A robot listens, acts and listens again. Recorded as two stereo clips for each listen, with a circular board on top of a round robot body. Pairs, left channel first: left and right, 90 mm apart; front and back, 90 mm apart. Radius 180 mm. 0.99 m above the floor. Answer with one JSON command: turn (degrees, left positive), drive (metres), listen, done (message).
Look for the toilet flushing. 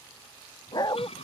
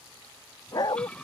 {"turn": 80}
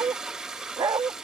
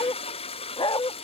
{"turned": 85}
{"done": "Facing the toilet flushing."}